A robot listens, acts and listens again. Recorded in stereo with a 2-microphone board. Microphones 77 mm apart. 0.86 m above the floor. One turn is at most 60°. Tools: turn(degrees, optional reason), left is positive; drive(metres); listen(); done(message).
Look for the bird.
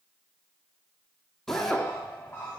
turn(degrees=35, reason="The bird: about 35° left or 145° left.")
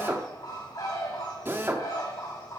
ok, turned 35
turn(degrees=60, reason="So it is at 110° left.")
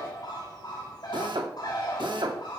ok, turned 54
turn(degrees=55, reason="The bird is now 55° left.")
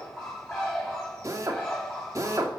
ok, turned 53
done("Found it: a bird, straight ahead, over 4 m away.")